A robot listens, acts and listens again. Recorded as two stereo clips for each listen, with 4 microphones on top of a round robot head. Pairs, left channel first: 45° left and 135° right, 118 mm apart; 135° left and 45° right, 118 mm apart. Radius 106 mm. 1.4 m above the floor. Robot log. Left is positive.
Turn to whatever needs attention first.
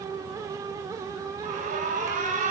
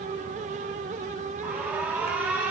note: The alarm: 120° right.
cmd yaw -120
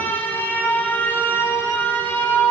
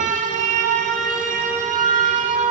note: The alarm is now 30° right.
cmd yaw -30
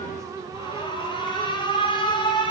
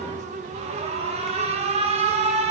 note: The alarm is now 10° right.
cmd yaw -10
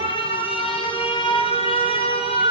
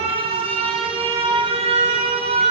end: Facing the alarm.